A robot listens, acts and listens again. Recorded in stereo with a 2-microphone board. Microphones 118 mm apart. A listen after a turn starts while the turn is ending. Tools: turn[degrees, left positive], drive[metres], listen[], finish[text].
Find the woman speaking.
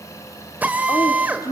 Thought: The woman speaking: about 30° left or 150° left.
Action: turn[30]
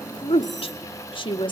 Thought: So it is at 135° left.
Action: turn[135]
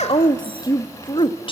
Thought: The woman speaking is now 50° left.
Action: turn[50]
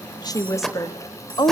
Thought: The woman speaking is now 40° left.
Action: turn[40]
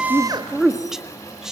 Action: finish[Found it: a woman speaking, straight ahead.]